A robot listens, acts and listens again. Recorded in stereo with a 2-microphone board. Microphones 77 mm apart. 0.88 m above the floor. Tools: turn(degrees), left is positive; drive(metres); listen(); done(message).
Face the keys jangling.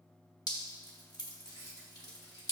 turn(degrees=-70)
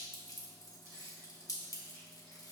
turn(degrees=-40)
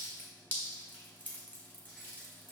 turn(degrees=-10)
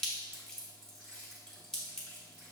done("Found it: keys jangling, straight ahead.")